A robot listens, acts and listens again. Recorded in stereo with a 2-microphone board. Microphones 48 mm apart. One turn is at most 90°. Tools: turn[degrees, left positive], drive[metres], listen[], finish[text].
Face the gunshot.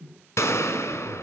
Action: turn[90]
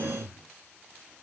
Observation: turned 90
Action: finish[Facing where the gunshot came from. I can't hear it now.]